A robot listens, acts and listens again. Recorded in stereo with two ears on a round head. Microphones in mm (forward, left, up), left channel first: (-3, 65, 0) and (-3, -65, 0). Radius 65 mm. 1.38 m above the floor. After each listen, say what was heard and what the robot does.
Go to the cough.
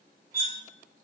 Keep listening.
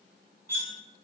Keep listening.
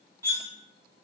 I can't make out a cough to turn to.